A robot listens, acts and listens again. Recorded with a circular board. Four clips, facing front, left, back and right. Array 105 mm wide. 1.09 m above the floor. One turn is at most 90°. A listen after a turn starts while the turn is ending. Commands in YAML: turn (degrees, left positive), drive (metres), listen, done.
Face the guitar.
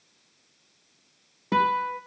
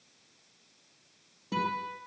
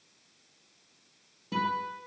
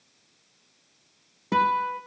turn: -40
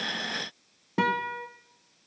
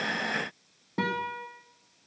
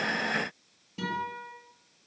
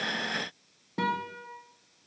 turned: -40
done: "Facing the guitar."